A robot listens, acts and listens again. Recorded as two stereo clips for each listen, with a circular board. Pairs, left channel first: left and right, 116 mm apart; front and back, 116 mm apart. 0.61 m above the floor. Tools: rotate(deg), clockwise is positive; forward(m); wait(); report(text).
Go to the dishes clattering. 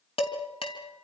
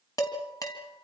rotate(-60)
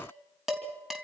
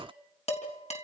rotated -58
forward(1.0)
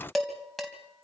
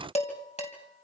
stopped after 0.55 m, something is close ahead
report("Something is in my way. I am facing the dishes clattering but have not reached it.")